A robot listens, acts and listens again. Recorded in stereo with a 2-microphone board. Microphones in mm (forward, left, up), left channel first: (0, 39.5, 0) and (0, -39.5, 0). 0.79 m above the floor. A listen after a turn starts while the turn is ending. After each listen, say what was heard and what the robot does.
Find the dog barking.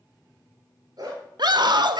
The dog barking: about 55° right or 125° right. Turn 55° right.
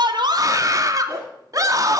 Keep listening.
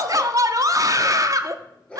So it is at 15° left. Turn 15° left.
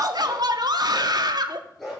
Facing the dog barking, over 4 m away.